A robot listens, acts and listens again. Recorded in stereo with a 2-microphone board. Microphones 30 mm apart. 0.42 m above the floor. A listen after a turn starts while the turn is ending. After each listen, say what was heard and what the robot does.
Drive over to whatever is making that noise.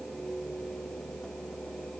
Keep listening.
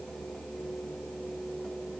Keep listening.
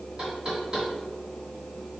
The knocking: about 25° right or 155° right. Turn 25° right.
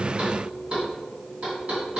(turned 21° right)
So it is at 135° right. Turn 135° right.
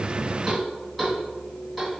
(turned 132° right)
Drive 1.0 m forward.
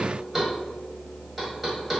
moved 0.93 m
The knocking is now 10° right. Turn 10° right.
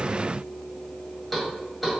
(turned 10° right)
Drive 1.0 m forward.
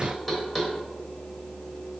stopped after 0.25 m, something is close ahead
I am next to the knocking.